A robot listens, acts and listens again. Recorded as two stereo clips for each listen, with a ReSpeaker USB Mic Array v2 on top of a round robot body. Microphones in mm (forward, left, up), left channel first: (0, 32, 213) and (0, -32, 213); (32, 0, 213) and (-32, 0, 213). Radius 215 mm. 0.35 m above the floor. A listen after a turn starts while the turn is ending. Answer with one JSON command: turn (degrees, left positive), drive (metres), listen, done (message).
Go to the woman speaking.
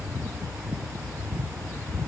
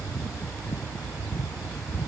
{"listen": true}
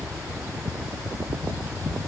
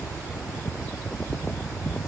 {"listen": true}
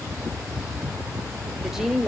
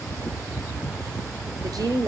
{"turn": -175}
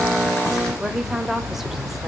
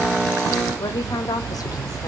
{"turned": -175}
{"drive": 1.0}
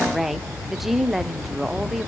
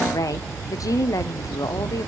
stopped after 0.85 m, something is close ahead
{"done": "Arrived at the woman speaking, straight ahead."}